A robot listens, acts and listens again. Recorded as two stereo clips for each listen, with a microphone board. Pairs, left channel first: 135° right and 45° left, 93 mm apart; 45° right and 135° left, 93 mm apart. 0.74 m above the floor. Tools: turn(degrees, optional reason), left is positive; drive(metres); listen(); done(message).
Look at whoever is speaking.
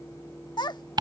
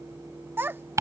turn(degrees=-160, reason="The child speaking: 160° right.")
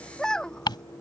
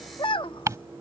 turn(degrees=-55, reason="The child speaking is now 55° right.")
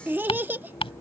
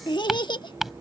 turn(degrees=-20, reason="The child speaking is now 20° right.")
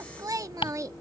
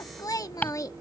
done("Facing the child speaking.")